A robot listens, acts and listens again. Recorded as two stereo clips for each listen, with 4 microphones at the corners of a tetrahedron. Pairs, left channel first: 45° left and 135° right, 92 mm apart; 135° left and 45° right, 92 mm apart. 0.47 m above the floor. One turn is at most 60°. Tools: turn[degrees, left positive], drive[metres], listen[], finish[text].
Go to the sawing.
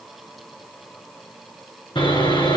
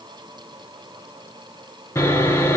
Thought: The sawing: 75° left.
Action: turn[60]
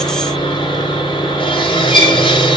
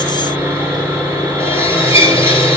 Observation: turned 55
Thought: The sawing is now 20° left.
Action: turn[20]
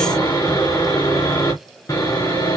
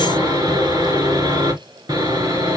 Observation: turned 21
Action: drive[1.0]
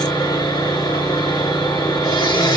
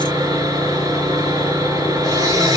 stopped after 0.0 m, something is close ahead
Action: finish[Blocked. The sawing is further on, straight ahead.]